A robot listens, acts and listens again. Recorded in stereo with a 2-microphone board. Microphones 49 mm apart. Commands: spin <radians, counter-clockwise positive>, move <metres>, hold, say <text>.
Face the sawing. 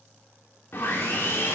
spin 0.87
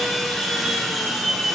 say Found it: sawing, straight ahead, 1 to 2 m away.